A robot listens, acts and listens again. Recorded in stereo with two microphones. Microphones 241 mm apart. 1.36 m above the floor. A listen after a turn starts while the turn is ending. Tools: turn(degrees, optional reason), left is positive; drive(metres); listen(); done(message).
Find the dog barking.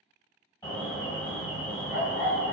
turn(degrees=45, reason="The dog barking: about 45° left or 135° left.")
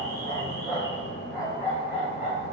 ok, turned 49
turn(degrees=-10, reason="So it is at 10° right.")
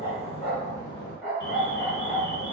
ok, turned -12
done("Facing the dog barking, 2 to 4 m away.")